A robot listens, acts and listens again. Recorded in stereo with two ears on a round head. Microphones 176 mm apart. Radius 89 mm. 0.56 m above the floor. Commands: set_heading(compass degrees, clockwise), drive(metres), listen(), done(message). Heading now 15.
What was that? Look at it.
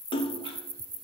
set_heading(345)
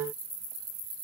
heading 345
listen()
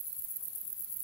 done("I heard a splash, but can't make it out now. It was about straight ahead or 120° left.")